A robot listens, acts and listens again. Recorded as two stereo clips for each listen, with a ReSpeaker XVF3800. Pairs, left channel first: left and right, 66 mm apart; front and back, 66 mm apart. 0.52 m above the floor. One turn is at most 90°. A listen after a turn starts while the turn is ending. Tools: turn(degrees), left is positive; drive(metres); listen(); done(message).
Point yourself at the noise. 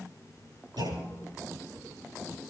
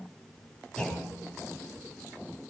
turn(degrees=-80)
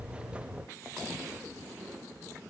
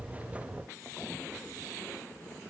done("I heard a clunk from this way, but can't make it out now.")